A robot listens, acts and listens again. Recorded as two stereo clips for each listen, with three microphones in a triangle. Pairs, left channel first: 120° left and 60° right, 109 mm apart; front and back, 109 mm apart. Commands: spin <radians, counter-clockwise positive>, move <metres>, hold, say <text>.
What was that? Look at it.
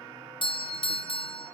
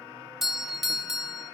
spin 1.66
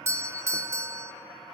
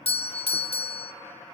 say Facing the doorbell.